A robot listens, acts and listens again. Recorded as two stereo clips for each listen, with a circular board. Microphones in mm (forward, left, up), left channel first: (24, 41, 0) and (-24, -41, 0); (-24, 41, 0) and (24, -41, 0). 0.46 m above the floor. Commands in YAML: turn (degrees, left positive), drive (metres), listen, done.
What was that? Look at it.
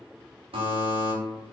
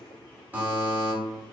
turn: -130
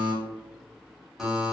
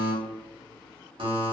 turn: -35
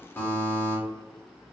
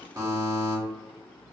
done: "Found it: a buzzer, straight ahead."